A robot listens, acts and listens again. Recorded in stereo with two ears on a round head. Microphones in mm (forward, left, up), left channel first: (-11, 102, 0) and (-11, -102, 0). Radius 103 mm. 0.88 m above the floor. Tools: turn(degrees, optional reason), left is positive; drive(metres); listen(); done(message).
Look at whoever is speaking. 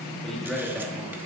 turn(degrees=-30)
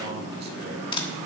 turn(degrees=-135, reason="So it is at 135° right.")
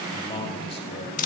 turn(degrees=20, reason="The man speaking is now 20° left.")
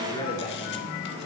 turn(degrees=20, reason="The man speaking is now 20° left.")
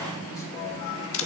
listen()
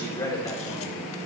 turn(degrees=15, reason="The man speaking is now 15° left.")
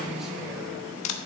listen()
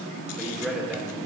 done("Facing the man speaking.")